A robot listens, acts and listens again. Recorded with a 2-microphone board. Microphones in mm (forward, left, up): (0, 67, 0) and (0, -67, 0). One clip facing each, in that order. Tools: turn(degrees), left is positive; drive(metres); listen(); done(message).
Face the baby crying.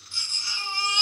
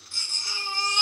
turn(degrees=-50)
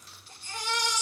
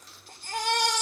turn(degrees=-75)
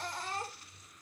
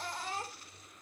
done("Facing the baby crying, 1 to 2 m away.")